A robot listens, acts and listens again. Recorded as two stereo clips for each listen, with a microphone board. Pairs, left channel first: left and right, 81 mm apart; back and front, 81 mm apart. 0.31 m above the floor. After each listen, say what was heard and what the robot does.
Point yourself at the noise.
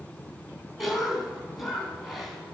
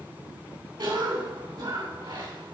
Facing the cough, 2 to 4 m away.